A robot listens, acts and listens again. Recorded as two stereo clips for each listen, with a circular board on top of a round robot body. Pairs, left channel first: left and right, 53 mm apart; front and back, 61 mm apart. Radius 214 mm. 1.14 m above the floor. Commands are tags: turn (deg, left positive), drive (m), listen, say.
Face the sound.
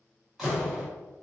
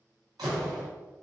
<turn deg="180"/>
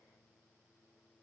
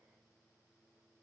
<say>Facing where the door slam came from. I can't hear it now.</say>